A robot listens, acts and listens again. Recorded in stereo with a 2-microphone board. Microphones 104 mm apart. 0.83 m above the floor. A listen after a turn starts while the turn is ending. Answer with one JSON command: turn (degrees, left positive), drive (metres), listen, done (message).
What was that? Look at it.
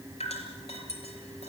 {"turn": 90}
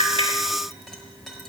{"listen": true}
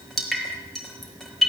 {"done": "Facing the dripping."}